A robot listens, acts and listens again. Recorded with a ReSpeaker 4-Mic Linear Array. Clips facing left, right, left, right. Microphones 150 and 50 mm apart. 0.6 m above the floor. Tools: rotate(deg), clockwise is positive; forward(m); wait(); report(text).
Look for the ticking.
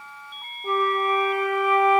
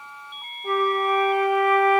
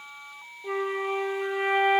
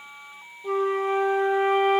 wait()
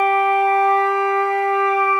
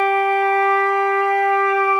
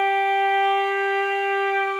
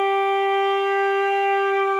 wait()
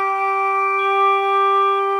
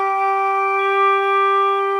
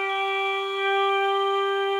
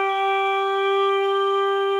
report("I can't make out ticking to turn to.")